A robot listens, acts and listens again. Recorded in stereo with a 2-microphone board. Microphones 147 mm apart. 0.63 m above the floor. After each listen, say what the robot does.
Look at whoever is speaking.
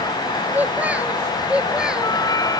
Turn 30° right.
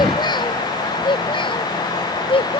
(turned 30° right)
Turn 35° left.
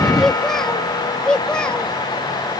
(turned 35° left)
Found it: a child speaking, straight ahead.